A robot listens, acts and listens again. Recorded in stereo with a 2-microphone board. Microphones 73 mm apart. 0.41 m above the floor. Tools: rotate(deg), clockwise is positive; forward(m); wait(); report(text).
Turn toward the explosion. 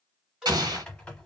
rotate(65)
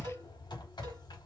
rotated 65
wait()
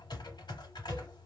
report("I heard an explosion, but can't make it out now. It was about straight ahead or 50° right.")